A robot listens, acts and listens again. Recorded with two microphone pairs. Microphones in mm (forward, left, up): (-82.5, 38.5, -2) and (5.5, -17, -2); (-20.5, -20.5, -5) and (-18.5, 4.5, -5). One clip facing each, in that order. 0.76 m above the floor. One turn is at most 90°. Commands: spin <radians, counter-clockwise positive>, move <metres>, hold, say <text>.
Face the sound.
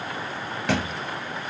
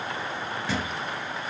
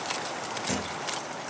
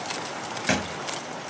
spin 1.57
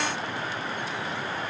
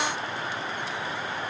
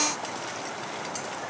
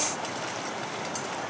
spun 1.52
spin 0.87
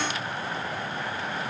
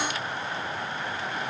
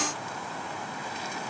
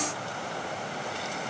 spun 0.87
say I heard a thud from this way, but can't make it out now.